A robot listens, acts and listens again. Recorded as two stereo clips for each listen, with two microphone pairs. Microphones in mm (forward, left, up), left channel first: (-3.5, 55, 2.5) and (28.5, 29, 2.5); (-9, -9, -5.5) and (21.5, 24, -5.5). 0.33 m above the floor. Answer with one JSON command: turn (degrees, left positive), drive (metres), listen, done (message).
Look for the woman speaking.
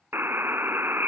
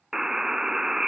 {"listen": true}
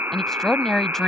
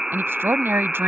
{"turn": 60}
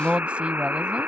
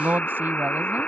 {"turn": 15}
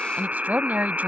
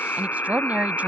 {"done": "Found it: a woman speaking, straight ahead."}